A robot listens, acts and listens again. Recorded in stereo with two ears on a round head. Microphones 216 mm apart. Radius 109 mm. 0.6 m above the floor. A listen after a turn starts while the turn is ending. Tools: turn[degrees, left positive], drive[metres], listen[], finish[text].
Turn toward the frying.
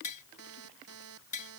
Action: listen[]
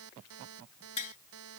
Action: listen[]
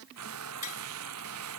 Thought: The frying: about 70° right or 110° right.
Action: turn[-70]
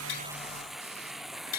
Action: finish[Found it: frying, straight ahead.]